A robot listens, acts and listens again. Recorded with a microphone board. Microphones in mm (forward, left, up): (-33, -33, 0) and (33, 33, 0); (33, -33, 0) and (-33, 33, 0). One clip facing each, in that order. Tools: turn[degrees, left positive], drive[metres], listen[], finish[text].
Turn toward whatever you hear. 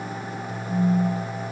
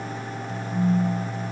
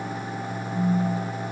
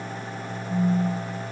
Thought: The phone buzzing: 145° right.
Action: turn[-145]
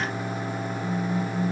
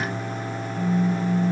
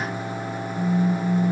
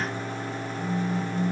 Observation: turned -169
Thought: The phone buzzing is now 25° left.
Action: turn[25]
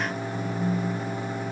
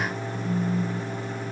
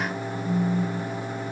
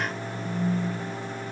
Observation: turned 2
Thought: Nothing new. It was at 25° left.
Action: turn[25]
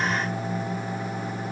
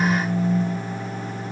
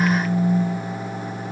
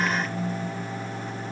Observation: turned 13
Thought: The phone buzzing is now 10° left.
Action: turn[10]
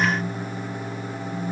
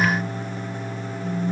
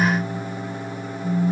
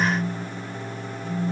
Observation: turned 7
Action: finish[Facing the phone buzzing.]